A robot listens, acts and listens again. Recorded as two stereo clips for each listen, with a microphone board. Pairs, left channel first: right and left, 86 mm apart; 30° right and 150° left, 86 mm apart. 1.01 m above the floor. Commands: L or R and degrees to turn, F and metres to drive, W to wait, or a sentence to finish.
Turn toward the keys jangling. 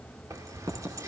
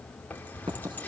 L40
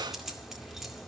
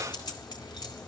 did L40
Facing the keys jangling.